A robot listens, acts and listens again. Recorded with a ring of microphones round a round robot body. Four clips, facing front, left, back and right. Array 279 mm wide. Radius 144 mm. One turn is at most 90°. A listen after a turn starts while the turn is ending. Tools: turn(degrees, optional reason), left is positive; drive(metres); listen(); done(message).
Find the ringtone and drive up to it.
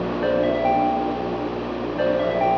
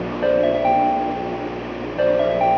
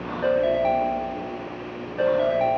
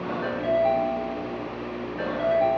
turn(degrees=90, reason="The ringtone: 95° left.")
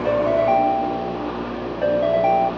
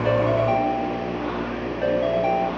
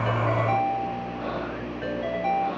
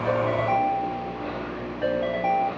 turn(degrees=10, reason="The ringtone is now 10° left.")
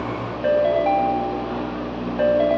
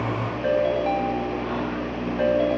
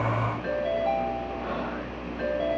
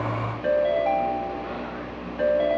drive(metres=1.0)
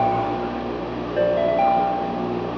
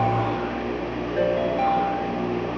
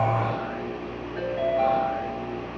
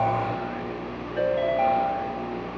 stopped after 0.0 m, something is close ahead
turn(degrees=10, reason="The ringtone is now 10° left.")
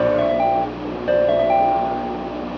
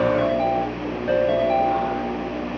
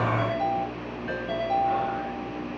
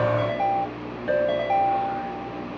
done("Something is in my way. I am facing the ringtone but have not reached it.")